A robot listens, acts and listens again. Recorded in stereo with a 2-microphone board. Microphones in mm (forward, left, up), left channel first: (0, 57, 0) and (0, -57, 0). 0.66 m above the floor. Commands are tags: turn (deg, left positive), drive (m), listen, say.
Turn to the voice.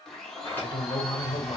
<turn deg="45"/>
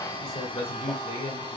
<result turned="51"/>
<turn deg="80"/>
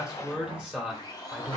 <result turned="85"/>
<say>Facing the man speaking, 1 to 2 m away.</say>